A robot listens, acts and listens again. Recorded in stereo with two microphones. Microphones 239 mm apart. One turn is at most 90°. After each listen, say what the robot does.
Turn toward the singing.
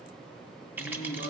Turn 65° left.
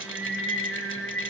Turn 30° right.
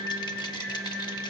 Turn 10° right.
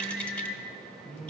Found it: singing, straight ahead, 2 to 4 m away.